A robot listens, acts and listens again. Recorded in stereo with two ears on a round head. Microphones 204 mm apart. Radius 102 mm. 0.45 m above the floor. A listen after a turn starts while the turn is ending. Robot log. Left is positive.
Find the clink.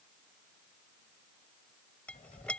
cmd yaw +30
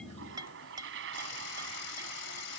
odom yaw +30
note: So it is at 20° right.
cmd yaw -20
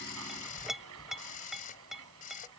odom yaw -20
end: Found it: a clink, straight ahead.